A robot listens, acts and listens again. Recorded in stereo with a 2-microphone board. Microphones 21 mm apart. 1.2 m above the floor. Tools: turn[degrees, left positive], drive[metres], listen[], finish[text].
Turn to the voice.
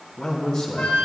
Thought: The man speaking: about 30° left or 150° left.
Action: turn[30]
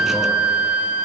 Action: listen[]
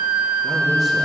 Action: listen[]
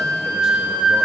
Action: finish[I heard a man speaking, but can't make it out now. It was about straight ahead or 120° left.]